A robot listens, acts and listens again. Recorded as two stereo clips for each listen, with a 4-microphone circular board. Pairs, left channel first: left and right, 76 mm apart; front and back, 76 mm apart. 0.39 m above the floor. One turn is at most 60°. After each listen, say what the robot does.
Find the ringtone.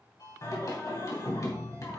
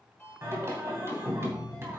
Turn 60° left.
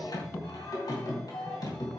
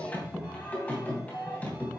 Keep listening.
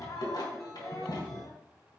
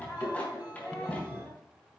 Keep listening.
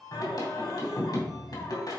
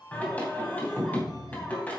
Found it: a ringtone, straight ahead.